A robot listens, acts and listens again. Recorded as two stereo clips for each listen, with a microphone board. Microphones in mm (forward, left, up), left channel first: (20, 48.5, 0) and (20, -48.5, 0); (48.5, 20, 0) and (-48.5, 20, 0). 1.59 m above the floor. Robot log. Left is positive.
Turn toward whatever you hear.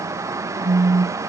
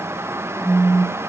note: The phone buzzing: 140° right.
cmd yaw -140
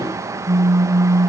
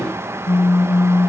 note: The phone buzzing is now 15° right.
cmd yaw -15
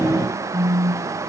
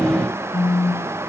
end: Found it: a phone buzzing, straight ahead, over 4 m away.